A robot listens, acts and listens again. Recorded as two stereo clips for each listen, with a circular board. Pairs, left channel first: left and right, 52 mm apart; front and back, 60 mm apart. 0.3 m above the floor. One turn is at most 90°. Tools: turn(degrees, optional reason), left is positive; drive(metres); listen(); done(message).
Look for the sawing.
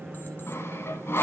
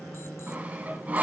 turn(degrees=90, reason="The sawing: 120° left.")
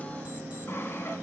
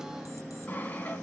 turn(degrees=60, reason="The sawing is now 60° left.")
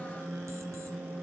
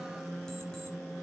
listen()
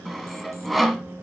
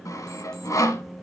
done("Found it: sawing, straight ahead.")